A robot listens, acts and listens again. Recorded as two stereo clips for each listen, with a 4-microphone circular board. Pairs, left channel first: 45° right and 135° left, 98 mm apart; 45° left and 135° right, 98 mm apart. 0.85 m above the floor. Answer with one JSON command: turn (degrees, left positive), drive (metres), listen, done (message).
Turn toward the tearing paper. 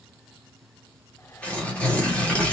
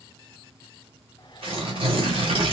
{"turn": -120}
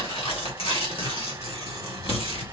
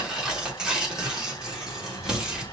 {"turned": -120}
{"turn": -55}
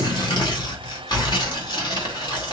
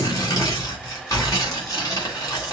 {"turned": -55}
{"done": "Facing the tearing paper."}